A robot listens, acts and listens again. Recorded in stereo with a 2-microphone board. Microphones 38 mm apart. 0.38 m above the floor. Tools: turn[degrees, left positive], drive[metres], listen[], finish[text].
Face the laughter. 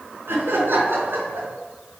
Action: turn[-90]
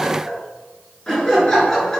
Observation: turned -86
Thought: So it is at 20° left.
Action: turn[20]
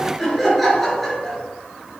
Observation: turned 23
Action: finish[Facing the laughter.]